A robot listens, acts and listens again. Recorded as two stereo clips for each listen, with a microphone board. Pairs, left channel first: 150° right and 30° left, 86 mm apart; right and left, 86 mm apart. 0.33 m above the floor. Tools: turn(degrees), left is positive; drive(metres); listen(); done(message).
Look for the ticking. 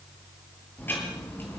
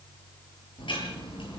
turn(degrees=-85)
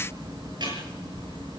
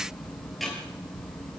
done("Found it: ticking, straight ahead, over 4 m away.")